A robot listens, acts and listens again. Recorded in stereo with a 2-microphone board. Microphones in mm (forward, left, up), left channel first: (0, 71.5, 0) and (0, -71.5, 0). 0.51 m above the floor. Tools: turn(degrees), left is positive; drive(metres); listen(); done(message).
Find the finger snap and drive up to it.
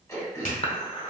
turn(degrees=75)
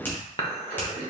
listen()
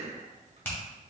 turn(degrees=15)
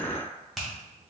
drive(metres=1.0)
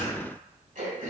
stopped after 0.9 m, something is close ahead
listen()
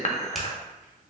listen()
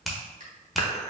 done("I am next to the finger snap.")